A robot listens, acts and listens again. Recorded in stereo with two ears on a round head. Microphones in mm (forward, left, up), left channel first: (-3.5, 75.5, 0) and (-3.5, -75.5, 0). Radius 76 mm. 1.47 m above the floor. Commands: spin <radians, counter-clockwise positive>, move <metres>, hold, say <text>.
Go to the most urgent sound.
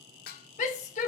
spin 0.79
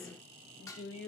spin 1.57
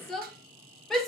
move 1.0
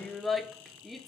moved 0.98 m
move 1.0
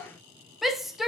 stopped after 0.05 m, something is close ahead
say I am next to the shout.